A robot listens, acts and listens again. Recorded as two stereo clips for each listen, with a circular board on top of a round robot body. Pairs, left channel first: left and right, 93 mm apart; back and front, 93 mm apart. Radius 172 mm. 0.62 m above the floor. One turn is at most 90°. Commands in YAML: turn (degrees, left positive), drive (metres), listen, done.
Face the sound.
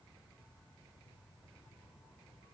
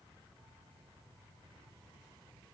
listen: true
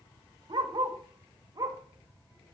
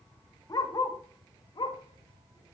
turn: -90
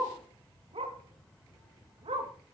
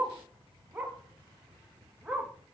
turn: -80
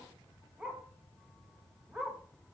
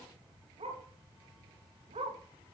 turn: -10
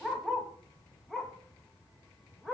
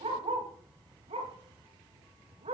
done: "Found it: a dog barking, straight ahead, 2 to 4 m away."